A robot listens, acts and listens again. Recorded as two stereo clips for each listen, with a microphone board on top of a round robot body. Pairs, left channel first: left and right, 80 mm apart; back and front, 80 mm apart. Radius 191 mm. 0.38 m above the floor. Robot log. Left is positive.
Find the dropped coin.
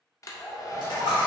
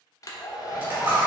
note: The dropped coin: 65° left.
cmd yaw +65
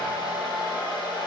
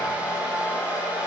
end: Facing where the dropped coin came from. I can't hear it now.